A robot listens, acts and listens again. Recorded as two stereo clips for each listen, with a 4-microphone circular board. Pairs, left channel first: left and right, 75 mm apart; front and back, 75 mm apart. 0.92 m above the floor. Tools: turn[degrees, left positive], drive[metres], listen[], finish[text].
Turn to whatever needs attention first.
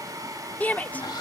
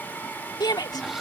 Thought: The shout: 25° left.
Action: turn[25]
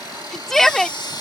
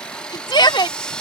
Action: finish[Facing the shout.]